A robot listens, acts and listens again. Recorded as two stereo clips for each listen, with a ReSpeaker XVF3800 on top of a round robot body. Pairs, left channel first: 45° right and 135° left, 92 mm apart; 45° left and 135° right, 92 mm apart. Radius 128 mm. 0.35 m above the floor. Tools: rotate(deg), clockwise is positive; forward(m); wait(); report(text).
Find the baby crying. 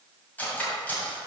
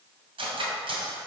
wait()
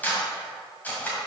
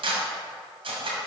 wait()
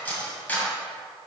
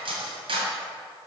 report("I can't make out a baby crying to turn to.")